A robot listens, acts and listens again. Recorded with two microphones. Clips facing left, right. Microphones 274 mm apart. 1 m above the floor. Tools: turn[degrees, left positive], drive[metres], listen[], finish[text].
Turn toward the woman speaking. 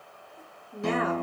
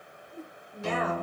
Thought: The woman speaking: about 65° left or 115° left.
Action: turn[65]
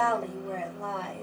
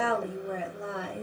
Thought: So it is at 15° right.
Action: turn[-15]
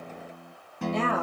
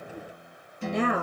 Thought: The woman speaking is now 20° right.
Action: turn[-20]
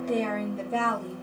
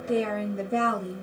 Thought: The woman speaking is now 25° right.
Action: turn[-25]
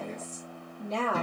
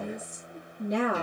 Thought: The woman speaking is now 15° right.
Action: turn[-15]
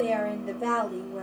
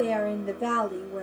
Action: finish[Found it: a woman speaking, straight ahead.]